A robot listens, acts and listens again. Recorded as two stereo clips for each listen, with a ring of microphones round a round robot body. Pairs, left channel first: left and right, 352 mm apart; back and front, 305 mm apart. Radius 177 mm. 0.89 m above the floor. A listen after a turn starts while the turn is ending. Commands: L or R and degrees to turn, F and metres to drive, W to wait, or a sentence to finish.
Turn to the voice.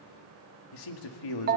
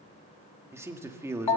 L80
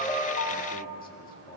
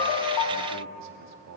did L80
L25
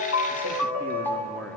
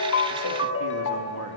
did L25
W
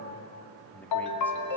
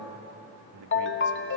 Facing the man speaking, 2 to 4 m away.